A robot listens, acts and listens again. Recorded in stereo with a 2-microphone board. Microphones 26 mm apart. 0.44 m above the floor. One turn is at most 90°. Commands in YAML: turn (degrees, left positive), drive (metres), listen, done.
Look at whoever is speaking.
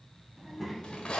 turn: 30
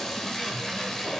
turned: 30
listen: true
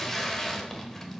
turn: 15
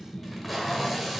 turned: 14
turn: 30
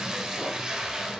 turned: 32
listen: true
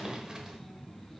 turn: -10
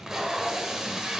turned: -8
listen: true
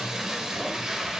listen: true
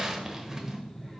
done: "Found it: a child speaking, straight ahead, 2 to 4 m away."